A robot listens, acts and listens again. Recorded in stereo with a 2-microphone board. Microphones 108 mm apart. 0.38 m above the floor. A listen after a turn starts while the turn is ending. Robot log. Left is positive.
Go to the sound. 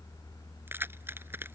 note: The keys jangling: about 20° right or 160° right.
cmd yaw -20
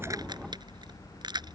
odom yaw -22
note: So it is at 140° right.
cmd yaw -140
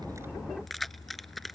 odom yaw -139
cmd fwd 1.0
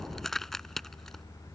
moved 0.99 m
cmd fwd 1.0
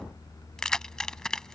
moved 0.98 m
cmd fwd 1.0
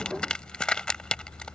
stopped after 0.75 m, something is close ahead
note: The keys jangling is now 10° left.
cmd yaw +10
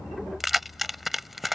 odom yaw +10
end: I am next to the keys jangling.